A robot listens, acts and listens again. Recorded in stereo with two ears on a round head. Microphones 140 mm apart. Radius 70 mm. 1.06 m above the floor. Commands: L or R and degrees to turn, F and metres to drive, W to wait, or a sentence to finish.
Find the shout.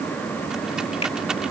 W
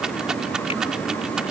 W
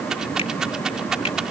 I can't make out a shout, only a rattle.